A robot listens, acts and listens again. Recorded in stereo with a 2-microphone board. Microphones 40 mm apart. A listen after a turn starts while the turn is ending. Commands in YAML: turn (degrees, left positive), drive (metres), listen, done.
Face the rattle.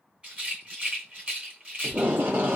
turn: -30
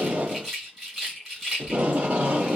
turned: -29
done: "Facing the rattle."